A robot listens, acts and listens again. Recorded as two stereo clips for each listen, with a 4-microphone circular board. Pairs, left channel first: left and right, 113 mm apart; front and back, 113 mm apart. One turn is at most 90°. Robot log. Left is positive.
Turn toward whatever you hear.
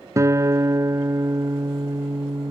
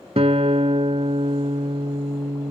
note: The guitar: 150° right.
cmd yaw -90
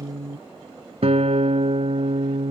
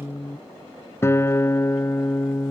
note: The guitar is now 65° right.
cmd yaw -65
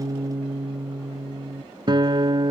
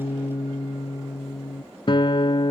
note: The guitar is now 45° right.
cmd yaw -45
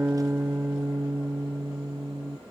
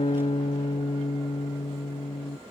note: The guitar is now 15° right.
cmd yaw -15
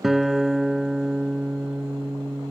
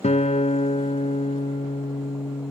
end: Facing the guitar.